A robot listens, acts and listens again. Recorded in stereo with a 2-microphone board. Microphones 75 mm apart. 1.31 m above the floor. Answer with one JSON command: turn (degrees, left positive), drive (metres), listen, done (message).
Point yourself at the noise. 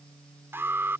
{"turn": -35}
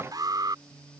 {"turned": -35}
{"turn": -110}
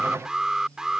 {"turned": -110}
{"turn": -10}
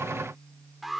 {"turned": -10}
{"done": "Facing the alarm."}